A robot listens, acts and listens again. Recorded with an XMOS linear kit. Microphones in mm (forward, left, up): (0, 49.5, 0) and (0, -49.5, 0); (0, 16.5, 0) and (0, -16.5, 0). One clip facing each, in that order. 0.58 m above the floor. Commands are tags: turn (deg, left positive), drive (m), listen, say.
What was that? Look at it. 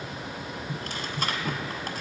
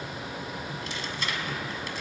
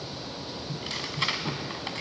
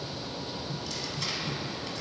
<turn deg="50"/>
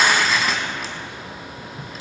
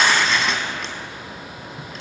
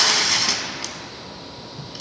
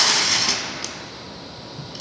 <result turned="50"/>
<say>Facing the tearing paper.</say>